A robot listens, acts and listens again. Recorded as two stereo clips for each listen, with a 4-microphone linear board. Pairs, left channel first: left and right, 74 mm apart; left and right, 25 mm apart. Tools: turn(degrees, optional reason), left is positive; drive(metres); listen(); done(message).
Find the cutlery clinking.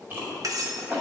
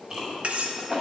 turn(degrees=-55, reason="The cutlery clinking: about 55° right or 125° right.")
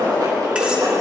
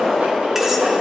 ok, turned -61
listen()
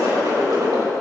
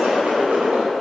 listen()
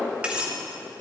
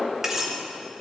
turn(degrees=-20, reason="So it is at 20° right.")
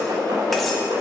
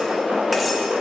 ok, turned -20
listen()
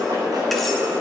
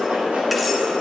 listen()
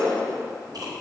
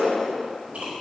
done("I heard cutlery clinking from this way, but can't make it out now.")